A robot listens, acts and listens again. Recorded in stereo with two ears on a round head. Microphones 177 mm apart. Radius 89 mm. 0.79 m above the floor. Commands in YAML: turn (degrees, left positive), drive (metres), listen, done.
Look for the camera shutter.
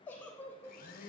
listen: true
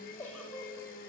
listen: true
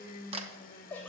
turn: -30
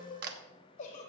turn: -120
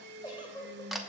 done: "Found it: a camera shutter, straight ahead."